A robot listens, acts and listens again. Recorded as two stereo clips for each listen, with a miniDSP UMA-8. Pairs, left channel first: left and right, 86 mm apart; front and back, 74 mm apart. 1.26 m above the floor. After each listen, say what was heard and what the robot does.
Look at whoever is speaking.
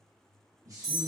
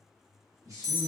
The man speaking: 140° right. Turn 140° right.
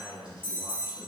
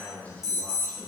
The man speaking is now 70° right. Turn 70° right.
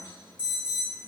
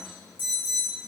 Keep listening.
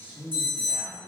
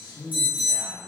The man speaking is now 25° right. Turn 25° right.
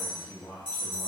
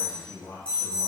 The man speaking is now 15° left. Turn 15° left.
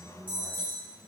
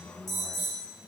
Facing the man speaking.